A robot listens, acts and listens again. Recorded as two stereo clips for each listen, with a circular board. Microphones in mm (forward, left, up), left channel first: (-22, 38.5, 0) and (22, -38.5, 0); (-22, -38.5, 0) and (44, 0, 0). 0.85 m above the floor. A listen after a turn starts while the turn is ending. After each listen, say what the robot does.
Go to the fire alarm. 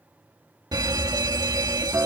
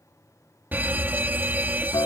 Turn 35° right.
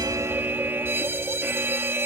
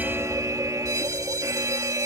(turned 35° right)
Drive 1.0 m forward.
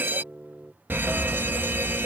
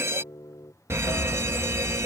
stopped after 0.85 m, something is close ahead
I am next to the fire alarm.